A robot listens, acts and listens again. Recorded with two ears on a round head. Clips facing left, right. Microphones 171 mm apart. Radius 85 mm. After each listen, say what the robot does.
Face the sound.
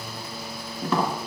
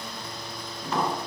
Turn 50° left.
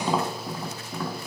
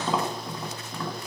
Found it: tapping, straight ahead.